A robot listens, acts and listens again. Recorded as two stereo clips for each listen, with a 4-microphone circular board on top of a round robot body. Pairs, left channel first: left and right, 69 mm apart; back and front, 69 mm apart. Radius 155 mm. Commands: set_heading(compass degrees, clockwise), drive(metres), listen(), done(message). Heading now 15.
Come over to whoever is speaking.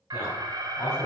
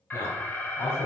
set_heading(245)
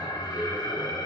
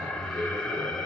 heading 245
set_heading(265)
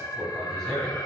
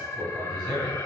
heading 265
drive(1.0)
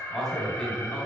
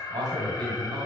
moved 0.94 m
drive(1.0)
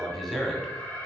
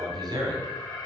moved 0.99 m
drive(1.0)
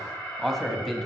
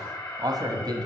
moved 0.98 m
drive(1.0)
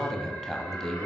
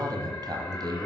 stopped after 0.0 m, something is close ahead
set_heading(255)
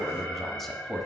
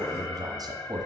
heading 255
done("I am next to the man speaking.")